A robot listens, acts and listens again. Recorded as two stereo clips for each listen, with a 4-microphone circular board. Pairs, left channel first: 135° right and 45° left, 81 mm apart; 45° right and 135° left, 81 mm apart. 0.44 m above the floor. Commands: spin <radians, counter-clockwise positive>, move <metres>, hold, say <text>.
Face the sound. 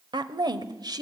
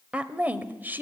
spin 1.22
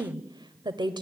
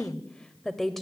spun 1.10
spin 0.70
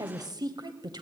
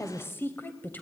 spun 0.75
spin 0.35
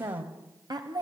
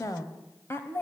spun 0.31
spin 0.26
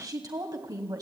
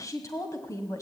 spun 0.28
say Found it: a woman speaking, straight ahead.